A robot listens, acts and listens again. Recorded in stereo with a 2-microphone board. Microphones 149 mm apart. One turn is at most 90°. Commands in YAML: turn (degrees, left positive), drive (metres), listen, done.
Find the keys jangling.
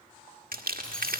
turn: 30
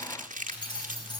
turn: 90
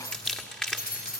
turn: 85
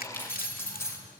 turn: 20
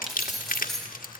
done: "Found it: keys jangling, straight ahead."